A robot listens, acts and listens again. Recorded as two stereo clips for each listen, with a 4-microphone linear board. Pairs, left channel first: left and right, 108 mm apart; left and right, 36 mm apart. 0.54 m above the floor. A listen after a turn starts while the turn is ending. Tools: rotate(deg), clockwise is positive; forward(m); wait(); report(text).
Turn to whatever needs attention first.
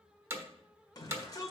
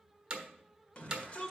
rotate(-35)
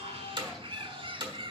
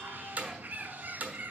wait()
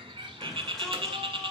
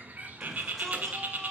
report("Found it: a shout, straight ahead, 1 to 2 m away.")